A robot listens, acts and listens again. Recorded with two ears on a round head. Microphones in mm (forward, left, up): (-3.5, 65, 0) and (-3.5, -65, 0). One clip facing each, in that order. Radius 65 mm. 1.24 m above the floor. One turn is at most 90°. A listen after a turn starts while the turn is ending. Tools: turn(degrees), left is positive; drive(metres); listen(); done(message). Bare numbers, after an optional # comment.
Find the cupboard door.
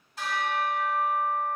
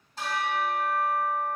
listen()
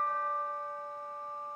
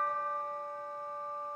listen()
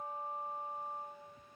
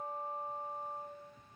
done("I can't make out a cupboard door, only a bell.")